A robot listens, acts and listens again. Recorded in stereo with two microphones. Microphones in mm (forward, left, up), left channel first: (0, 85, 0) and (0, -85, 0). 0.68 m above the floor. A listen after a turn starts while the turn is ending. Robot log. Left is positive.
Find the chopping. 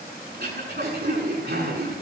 cmd idle
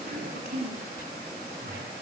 cmd idle
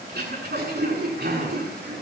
end: I can't make out chopping, only throat clearing.